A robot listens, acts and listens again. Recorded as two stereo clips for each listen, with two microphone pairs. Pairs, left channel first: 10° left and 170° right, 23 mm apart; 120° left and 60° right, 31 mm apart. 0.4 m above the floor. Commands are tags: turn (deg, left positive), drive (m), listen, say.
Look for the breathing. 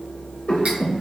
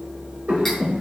<turn deg="-15"/>
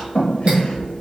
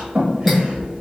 <say>Found it: breathing, straight ahead, under 1 m away.</say>